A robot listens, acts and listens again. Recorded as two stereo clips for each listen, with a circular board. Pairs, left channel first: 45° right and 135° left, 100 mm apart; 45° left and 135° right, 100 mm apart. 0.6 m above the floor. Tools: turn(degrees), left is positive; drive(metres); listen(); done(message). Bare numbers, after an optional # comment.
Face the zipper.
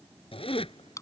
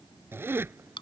# The zipper: 70° right.
turn(-70)
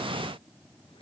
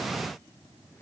listen()
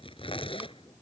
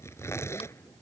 # The zipper is now 20° right.
turn(-20)
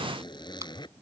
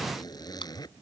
done("Facing the zipper.")